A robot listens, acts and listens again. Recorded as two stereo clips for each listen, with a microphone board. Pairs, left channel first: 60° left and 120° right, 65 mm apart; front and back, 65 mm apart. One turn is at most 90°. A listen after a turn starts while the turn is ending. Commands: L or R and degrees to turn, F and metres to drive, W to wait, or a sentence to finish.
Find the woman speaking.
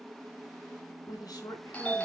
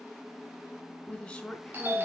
L80
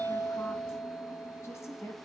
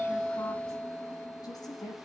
L20
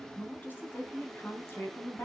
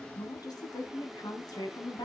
L10
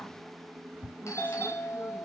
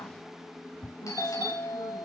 W
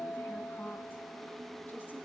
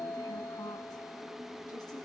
W
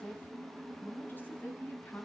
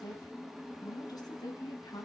Facing the woman speaking, over 4 m away.